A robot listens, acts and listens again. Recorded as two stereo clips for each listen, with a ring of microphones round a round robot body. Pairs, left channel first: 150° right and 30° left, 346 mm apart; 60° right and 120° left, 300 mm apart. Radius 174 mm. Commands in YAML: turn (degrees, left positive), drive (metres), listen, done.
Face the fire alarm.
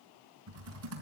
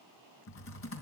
listen: true
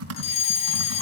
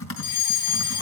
turn: -80
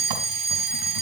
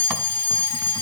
turn: -30
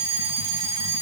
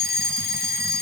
done: "Facing the fire alarm, 2 to 4 m away."